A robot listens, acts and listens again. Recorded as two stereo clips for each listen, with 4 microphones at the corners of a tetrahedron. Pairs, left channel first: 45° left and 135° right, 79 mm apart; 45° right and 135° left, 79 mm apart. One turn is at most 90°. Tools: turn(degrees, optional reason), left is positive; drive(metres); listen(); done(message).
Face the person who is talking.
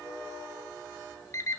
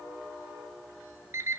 listen()
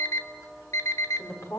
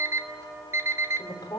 turn(degrees=-10, reason="The woman speaking: 10° right.")
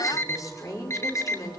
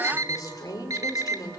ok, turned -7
done("Facing the woman speaking.")